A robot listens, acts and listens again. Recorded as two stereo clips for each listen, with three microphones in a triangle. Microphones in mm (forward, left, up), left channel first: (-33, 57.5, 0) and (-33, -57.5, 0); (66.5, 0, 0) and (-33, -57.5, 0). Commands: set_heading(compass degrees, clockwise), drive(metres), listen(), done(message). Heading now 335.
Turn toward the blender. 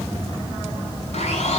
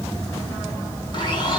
set_heading(255)
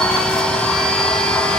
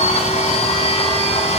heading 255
set_heading(245)
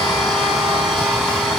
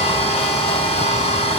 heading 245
done("Facing the blender, over 4 m away.")